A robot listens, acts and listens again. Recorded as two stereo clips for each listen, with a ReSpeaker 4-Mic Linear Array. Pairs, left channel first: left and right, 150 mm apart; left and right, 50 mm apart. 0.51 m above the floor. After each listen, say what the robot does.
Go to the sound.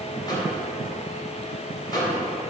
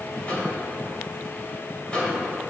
Turn 30° left.
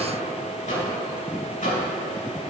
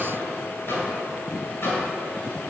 Turn 120° left.
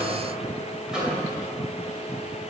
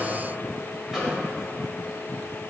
Drive 1.0 m forward.
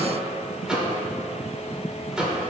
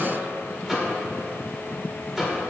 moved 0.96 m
Drive 1.0 m forward.
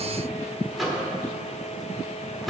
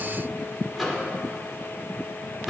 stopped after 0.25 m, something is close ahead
I am next to the microwave.